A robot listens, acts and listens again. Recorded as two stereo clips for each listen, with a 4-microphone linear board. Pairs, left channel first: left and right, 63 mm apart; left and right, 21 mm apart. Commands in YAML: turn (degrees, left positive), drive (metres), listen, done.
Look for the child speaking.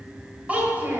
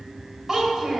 turn: -30
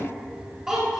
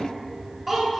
turn: -15
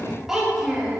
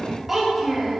turn: -10
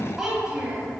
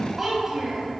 turn: -10
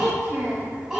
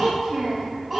turn: -10
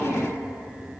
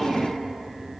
listen: true
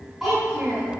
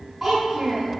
done: "Facing the child speaking."